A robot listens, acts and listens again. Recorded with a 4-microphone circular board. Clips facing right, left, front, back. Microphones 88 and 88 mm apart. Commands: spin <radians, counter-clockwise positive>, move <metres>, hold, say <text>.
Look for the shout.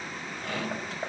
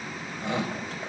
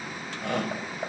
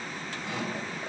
spin 0.35
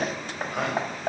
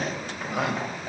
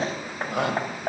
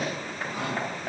say Found it: a shout, straight ahead.